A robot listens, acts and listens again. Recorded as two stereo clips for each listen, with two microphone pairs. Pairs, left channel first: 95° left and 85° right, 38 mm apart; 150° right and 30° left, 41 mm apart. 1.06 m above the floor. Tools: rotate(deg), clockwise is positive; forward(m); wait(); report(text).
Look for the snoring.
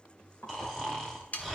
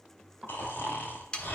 rotate(-175)
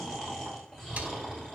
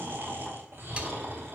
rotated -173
report("Facing the snoring.")